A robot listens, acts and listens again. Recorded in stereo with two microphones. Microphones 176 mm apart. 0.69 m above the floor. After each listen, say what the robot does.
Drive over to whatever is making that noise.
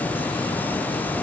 Keep listening.
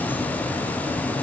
Keep listening.
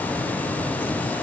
I can't make out anything to turn to.